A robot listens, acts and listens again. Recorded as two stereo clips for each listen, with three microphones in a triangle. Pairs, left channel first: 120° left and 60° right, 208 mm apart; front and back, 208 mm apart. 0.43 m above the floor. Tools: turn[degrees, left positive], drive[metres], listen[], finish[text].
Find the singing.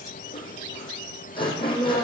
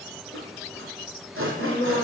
Thought: The singing: 65° right.
Action: turn[-65]
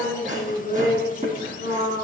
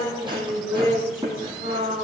Action: finish[Facing the singing.]